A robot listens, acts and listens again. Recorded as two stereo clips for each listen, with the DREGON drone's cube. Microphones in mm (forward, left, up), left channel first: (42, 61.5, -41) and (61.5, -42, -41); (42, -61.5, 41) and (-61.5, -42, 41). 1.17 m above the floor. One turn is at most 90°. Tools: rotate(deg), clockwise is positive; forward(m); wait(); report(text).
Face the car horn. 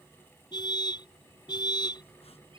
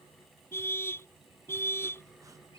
rotate(-55)
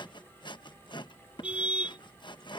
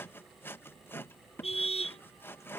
report("Found it: a car horn, straight ahead.")